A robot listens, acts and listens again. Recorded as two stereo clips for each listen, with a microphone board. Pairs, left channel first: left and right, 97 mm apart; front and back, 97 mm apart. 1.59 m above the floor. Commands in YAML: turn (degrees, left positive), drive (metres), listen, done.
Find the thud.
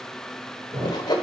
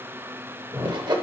turn: -125
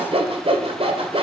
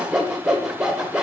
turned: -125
done: "I heard a thud from this way, but can't make it out now."